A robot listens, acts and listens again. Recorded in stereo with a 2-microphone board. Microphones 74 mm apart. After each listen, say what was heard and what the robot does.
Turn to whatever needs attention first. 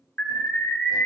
The alarm: about 30° left or 150° left. Turn 30° left.
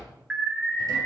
Found it: an alarm, straight ahead, 2 to 4 m away.